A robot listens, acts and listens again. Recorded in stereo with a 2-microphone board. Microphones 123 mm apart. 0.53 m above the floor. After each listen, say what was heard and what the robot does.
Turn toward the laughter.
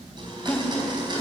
The laughter: about 30° left or 150° left. Turn 30° left.
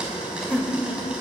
So it is at 15° left. Turn 15° left.
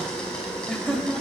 The laughter is now 10° left. Turn 10° left.
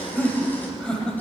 The laughter is now 10° left. Turn 10° left.
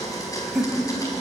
Found it: laughter, straight ahead, 2 to 4 m away.